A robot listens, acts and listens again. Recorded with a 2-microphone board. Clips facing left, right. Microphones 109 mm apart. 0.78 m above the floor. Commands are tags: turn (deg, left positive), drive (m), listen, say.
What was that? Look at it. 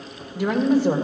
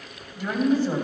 <turn deg="90"/>
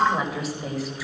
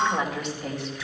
<say>Found it: a woman speaking, straight ahead, 2 to 4 m away.</say>